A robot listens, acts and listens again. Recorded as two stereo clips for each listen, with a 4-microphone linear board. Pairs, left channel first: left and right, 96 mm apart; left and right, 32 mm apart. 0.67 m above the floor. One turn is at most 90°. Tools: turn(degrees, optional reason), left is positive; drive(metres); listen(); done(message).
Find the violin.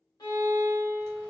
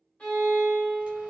turn(degrees=45, reason="The violin: about 45° left or 135° left.")
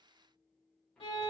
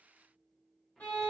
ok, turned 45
turn(degrees=90, reason="So it is at 95° left.")
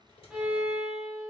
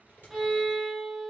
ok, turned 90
done("Facing the violin, 1 to 2 m away.")